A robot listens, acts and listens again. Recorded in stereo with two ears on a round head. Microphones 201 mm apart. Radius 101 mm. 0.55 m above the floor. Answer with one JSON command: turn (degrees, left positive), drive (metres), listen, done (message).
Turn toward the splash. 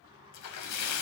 {"turn": 90}
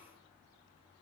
{"done": "Facing where the splash came from. I can't hear it now."}